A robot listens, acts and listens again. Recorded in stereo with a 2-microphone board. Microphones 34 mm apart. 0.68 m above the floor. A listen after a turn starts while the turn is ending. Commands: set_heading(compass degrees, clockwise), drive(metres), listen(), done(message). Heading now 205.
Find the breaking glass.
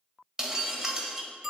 set_heading(225)
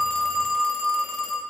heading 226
listen()
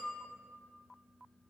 done("I heard breaking glass, but can't make it out now. It was about 5° left or 140° right.")